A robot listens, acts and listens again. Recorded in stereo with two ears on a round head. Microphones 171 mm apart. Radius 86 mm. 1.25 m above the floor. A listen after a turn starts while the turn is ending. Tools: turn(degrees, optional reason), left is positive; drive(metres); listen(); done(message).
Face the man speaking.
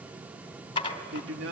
turn(degrees=-65, reason="The man speaking: about 65° right or 115° right.")
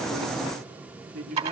turn(degrees=-50, reason="So it is at 50° right.")
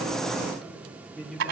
done("Facing the man speaking, over 4 m away.")